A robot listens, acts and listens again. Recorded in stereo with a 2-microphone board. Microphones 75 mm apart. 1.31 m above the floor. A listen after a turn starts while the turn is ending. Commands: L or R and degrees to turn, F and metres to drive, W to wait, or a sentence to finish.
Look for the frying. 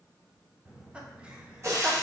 R45
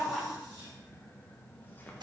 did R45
R95
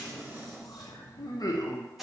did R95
Found it: frying, straight ahead.